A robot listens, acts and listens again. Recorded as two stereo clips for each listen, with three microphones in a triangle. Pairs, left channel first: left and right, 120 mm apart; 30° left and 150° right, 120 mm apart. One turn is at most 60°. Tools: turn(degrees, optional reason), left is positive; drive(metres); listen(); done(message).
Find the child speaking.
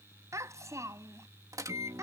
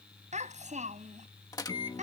turn(degrees=-60, reason="The child speaking: 155° right.")
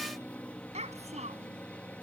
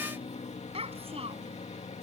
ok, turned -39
turn(degrees=-60, reason="The child speaking is now 115° right.")
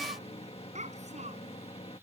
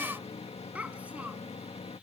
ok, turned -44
turn(degrees=-60, reason="The child speaking is now 70° right.")
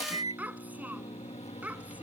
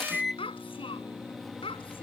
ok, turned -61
turn(degrees=-10, reason="The child speaking is now 10° right.")
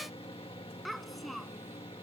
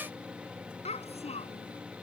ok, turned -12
done("Facing the child speaking.")